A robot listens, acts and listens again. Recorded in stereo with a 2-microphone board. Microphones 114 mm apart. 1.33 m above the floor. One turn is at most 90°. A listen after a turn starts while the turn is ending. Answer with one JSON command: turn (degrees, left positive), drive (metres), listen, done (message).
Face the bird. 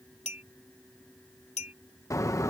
{"turn": 25}
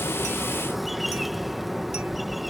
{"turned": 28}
{"done": "Facing the bird."}